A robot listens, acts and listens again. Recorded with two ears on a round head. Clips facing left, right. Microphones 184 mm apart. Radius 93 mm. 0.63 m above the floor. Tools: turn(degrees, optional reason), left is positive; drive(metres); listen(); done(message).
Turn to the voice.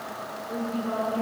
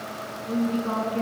turn(degrees=-60, reason="The woman speaking: about 60° right or 120° right.")
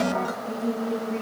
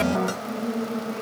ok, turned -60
done("Found it: a woman speaking, straight ahead, over 4 m away.")